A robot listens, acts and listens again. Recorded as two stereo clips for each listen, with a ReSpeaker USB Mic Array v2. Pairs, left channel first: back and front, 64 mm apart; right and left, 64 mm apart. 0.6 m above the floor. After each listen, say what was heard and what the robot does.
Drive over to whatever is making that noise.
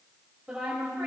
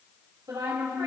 The woman speaking: 80° left. Turn 80° left.
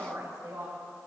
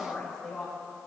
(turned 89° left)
The woman speaking is now 10° right. Turn 10° right.
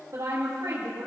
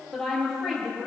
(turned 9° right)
Drive 1.0 m forward.
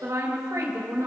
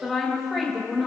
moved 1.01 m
Drive 1.0 m forward.
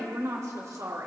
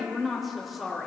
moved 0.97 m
Drive 1.0 m forward.
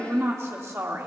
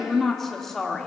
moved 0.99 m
The woman speaking is now 10° right. Turn 10° right.
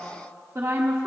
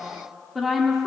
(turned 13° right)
Drive 1.0 m forward.
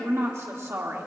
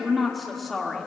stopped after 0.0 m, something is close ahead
I am next to the woman speaking.